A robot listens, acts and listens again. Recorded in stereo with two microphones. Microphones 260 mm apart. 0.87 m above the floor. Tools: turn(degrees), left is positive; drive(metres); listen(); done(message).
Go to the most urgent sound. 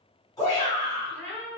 turn(degrees=30)
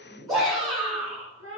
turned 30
turn(degrees=-15)
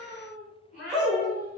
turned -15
drive(metres=1.0)
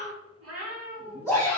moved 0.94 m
turn(degrees=-10)
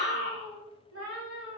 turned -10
drive(metres=1.0)
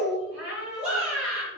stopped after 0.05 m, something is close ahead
done("I am next to the shout.")